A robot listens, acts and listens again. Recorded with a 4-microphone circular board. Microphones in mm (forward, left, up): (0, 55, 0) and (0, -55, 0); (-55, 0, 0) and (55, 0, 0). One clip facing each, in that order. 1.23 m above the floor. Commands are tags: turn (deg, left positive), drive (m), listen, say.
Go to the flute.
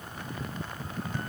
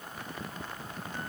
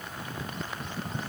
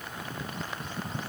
<listen/>
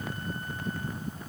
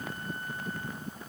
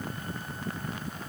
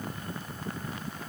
<listen/>
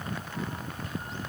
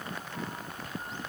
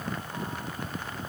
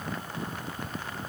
<say>I can't make out a flute.</say>